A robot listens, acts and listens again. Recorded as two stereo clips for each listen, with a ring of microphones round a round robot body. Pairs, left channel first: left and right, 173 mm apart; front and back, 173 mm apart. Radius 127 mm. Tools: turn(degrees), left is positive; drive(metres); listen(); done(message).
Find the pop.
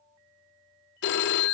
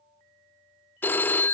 listen()
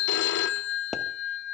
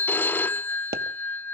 turn(degrees=180)
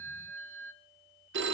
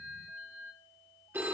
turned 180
done("Facing where the pop came from. I can't hear it now.")